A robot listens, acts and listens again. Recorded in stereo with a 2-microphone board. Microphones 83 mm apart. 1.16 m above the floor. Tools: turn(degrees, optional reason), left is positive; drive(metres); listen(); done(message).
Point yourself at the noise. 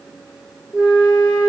turn(degrees=-15, reason="The flute: about 15° right or 165° right.")
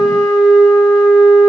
done("Facing the flute, 2 to 4 m away.")